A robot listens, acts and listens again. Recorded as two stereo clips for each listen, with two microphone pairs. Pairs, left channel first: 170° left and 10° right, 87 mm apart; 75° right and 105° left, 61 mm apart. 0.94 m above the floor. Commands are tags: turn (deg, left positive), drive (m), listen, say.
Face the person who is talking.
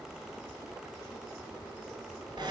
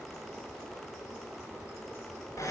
<listen/>
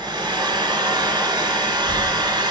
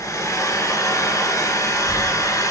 <turn deg="-150"/>
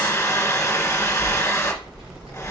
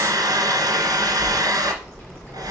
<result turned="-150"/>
<say>Facing the child speaking.</say>